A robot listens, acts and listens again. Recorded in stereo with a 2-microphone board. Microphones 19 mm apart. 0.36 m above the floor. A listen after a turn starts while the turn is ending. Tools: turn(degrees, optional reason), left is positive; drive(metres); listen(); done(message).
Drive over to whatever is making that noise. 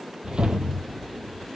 turn(degrees=-60, reason="The whoosh: about 60° right or 120° right.")
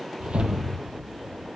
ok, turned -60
turn(degrees=-60, reason="So it is at 60° right.")
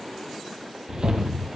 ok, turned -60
turn(degrees=-45, reason="The whoosh is now 45° right.")
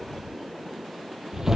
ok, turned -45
turn(degrees=-20, reason="The whoosh is now 20° right.")
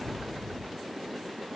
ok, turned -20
drive(metres=1.0)
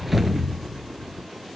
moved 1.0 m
drive(metres=1.0)
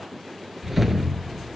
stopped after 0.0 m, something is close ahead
done("I am next to the whoosh.")